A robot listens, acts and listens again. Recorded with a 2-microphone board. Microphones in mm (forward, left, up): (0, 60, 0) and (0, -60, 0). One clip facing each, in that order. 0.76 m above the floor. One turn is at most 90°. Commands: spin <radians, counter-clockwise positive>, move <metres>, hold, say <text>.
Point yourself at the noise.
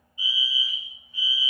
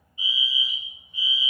spin -0.35
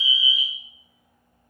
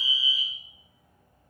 spin -1.57
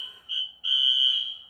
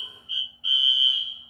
spin -0.44
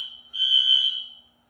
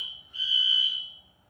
say Found it: a fire alarm, straight ahead, 2 to 4 m away.